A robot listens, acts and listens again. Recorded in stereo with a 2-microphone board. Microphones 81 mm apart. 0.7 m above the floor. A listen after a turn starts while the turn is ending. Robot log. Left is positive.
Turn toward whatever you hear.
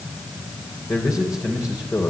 note: The man speaking: about 40° left or 140° left.
cmd yaw +40
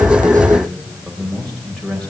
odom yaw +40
end: Found it: a man speaking, straight ahead.